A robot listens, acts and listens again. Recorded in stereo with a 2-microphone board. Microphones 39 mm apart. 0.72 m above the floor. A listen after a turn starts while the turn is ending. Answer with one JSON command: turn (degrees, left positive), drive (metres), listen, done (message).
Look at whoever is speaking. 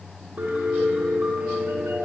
{"listen": true}
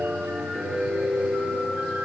{"listen": true}
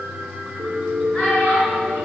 {"turn": 20}
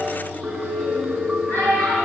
{"turn": 135}
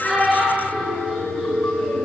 {"listen": true}
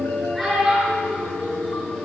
{"done": "Found it: a child speaking, straight ahead, over 4 m away."}